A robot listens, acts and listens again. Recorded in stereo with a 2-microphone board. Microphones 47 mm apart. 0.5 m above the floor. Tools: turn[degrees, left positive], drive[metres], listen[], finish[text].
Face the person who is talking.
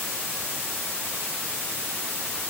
Action: listen[]
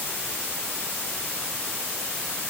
Action: listen[]
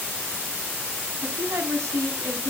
Action: turn[-90]
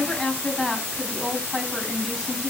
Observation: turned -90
Action: finish[Found it: a woman speaking, straight ahead.]